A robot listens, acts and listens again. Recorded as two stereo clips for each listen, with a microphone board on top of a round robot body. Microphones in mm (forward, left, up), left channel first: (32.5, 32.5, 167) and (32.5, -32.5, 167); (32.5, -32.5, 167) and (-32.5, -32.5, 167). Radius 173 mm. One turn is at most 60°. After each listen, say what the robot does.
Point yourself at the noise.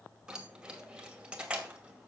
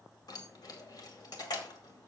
Turn 15° right.
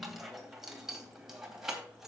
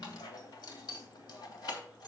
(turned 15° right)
Facing the keys jangling, 2 to 4 m away.